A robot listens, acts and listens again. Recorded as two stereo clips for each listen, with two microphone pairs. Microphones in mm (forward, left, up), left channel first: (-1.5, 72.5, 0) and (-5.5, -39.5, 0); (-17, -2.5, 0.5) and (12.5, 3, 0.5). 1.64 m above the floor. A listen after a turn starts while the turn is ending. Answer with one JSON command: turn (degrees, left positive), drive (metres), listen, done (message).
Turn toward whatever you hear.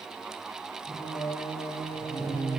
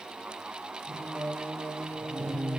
{"turn": -85}
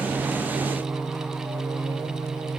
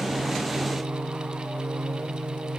{"done": "Found it: singing, straight ahead."}